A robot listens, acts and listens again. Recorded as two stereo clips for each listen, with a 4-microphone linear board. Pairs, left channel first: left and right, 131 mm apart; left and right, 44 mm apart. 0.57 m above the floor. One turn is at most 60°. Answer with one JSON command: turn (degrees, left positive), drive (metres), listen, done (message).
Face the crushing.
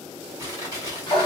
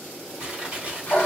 {"turn": -25}
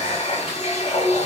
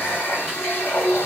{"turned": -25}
{"listen": true}
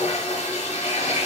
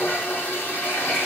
{"listen": true}
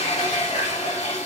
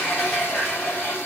{"done": "I heard crushing, but can't make it out now. It was about straight ahead or 130° right."}